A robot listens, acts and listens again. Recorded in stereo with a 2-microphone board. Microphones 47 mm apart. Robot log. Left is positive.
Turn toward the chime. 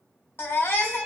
cmd idle
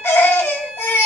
cmd idle
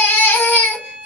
end: I can't make out a chime, only a baby crying and a violin.